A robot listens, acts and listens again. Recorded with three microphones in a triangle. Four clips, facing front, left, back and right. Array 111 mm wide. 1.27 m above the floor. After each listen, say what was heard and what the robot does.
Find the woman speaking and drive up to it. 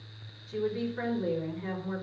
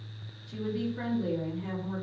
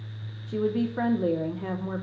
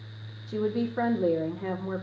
The woman speaking: 130° right. Turn 130° right.
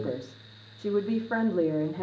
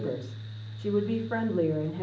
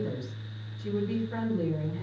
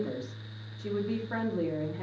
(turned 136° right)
Drive 1.0 m forward.
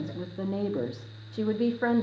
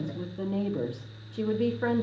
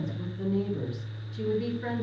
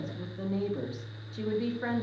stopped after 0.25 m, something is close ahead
The woman speaking is now 10° left. Turn 10° left.
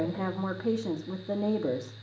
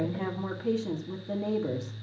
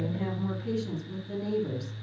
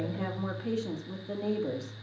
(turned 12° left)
Blocked. The woman speaking is further on, straight ahead.